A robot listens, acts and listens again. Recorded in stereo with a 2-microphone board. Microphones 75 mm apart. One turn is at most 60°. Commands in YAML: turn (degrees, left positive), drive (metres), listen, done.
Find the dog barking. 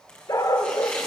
turn: 55
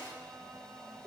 done: "Facing the dog barking."